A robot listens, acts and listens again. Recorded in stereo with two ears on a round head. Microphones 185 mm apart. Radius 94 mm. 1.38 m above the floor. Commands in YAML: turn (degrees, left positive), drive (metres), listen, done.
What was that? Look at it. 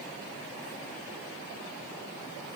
listen: true
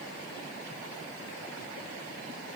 listen: true
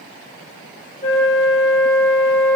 turn: 35
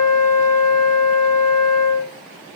turn: 110
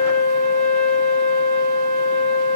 turn: 35
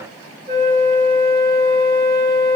turn: -15
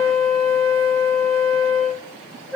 done: "Facing the flute, 1 to 2 m away."